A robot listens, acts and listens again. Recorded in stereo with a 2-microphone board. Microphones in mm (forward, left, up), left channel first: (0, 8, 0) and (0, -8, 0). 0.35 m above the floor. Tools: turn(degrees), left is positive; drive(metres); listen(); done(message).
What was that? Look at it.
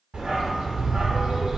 turn(degrees=-70)
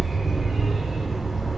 turn(degrees=-35)
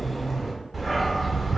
turn(degrees=-10)
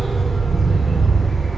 done("Found it: a dog barking, straight ahead, 1 to 2 m away.")